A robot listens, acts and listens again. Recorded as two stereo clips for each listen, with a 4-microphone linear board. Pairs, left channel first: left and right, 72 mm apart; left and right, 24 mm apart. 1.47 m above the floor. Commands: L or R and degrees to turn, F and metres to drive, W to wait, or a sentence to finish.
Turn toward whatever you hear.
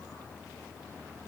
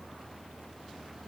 W
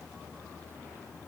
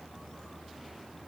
W
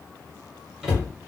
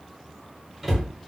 R30
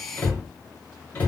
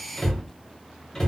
L20
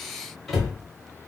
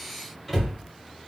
Found it: a cupboard door, straight ahead.